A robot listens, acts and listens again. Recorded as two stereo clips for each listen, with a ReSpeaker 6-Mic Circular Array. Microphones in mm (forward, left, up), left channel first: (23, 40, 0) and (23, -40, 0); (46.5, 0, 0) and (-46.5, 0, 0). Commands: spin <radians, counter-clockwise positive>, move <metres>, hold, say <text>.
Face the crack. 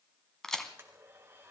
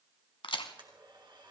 say Found it: a crack, straight ahead.